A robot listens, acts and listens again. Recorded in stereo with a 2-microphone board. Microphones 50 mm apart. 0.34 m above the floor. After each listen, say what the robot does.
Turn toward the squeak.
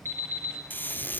Turn 45° left.
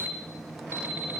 Keep listening.
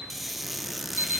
Facing the squeak.